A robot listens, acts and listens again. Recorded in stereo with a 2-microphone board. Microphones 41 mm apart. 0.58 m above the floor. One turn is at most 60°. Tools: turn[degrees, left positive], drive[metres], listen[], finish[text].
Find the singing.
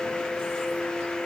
Action: listen[]
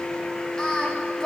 Thought: The singing: about 20° left or 160° left.
Action: turn[20]
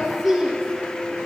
Thought: So it is at 10° right.
Action: turn[-10]
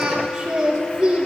Thought: The singing is now 25° right.
Action: turn[-25]
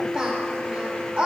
Thought: The singing is now 20° right.
Action: turn[-20]
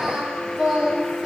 Thought: The singing is now 15° right.
Action: turn[-15]
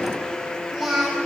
Action: finish[Found it: singing, straight ahead, 2 to 4 m away.]